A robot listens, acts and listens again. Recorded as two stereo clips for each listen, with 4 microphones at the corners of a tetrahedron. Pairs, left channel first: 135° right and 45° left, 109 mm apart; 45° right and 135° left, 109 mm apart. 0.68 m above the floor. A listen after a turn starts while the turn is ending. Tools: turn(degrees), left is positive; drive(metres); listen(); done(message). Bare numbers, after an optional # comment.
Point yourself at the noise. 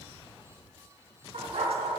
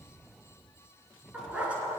# The dog barking: 60° left.
turn(60)
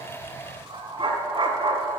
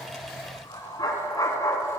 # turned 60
# The dog barking is now 15° left.
turn(15)
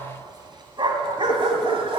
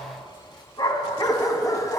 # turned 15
# The dog barking is now 15° left.
turn(15)
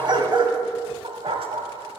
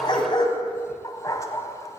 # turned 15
# The dog barking is now 15° left.
turn(15)
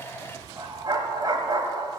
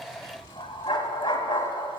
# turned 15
done("Facing the dog barking.")